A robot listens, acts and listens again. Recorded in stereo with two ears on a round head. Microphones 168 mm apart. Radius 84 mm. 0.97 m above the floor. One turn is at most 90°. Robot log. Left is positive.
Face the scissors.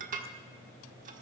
cmd idle
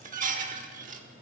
cmd idle
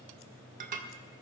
end: I can't make out scissors to turn to.